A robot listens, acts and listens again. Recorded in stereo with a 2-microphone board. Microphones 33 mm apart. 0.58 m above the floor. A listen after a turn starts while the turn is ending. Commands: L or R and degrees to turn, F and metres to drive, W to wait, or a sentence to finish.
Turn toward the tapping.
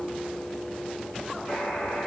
W
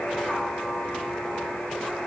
W
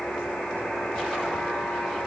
I can't make out tapping to turn to.